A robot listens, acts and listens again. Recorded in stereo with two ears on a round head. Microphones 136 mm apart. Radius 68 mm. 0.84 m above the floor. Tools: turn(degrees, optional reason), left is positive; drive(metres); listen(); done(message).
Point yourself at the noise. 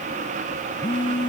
turn(degrees=30, reason="The phone buzzing: about 30° left or 150° left.")
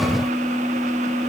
done("Facing the phone buzzing.")